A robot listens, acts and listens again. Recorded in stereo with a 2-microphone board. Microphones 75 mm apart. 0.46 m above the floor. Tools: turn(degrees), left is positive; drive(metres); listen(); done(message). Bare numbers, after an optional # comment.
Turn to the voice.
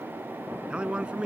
turn(-30)
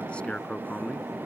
# So it is at 15° left.
turn(15)
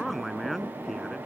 done("Facing the man speaking.")